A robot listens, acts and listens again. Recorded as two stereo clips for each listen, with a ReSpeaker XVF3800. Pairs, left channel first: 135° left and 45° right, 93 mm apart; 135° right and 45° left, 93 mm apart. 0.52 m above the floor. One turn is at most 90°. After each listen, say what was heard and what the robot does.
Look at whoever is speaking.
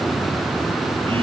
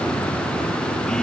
Keep listening.
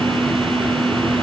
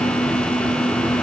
Keep listening.
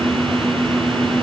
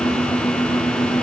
I can't make out anyone speaking to turn to.